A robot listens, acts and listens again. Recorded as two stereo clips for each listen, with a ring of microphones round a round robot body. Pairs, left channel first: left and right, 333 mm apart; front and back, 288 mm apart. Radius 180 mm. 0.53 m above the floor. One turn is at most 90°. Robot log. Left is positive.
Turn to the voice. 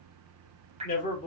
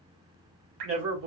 note: The man speaking: 155° left.
cmd yaw +90
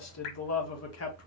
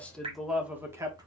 note: The man speaking is now 105° left.
cmd yaw +90
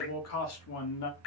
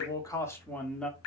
note: The man speaking is now 85° left.
cmd yaw +85
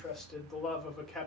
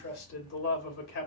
end: Facing the man speaking.